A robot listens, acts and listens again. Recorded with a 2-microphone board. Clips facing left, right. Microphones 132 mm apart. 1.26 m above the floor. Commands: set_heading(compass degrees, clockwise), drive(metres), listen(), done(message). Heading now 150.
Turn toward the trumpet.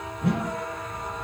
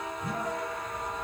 listen()
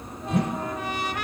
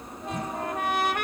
set_heading(205)
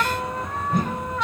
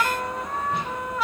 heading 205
done("Facing the trumpet, 1 to 2 m away.")